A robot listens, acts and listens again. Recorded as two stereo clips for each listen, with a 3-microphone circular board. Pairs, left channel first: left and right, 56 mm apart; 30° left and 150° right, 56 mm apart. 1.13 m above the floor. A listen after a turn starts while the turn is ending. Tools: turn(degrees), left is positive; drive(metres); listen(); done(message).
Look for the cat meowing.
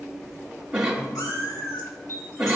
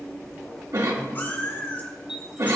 turn(degrees=90)
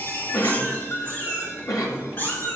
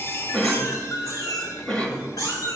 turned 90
turn(degrees=35)
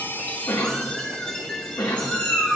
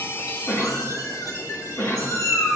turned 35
turn(degrees=20)
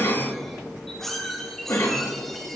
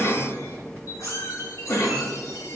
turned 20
done("Found it: a cat meowing, straight ahead.")